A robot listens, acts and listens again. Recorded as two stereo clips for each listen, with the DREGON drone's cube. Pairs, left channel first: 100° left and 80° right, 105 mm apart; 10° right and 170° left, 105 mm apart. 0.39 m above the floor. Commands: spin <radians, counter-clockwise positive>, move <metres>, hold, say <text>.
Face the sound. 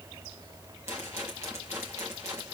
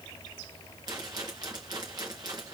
spin -2.44
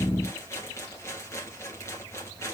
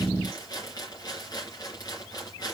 spin 0.70
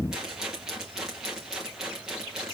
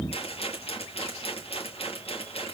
say Facing the rattle.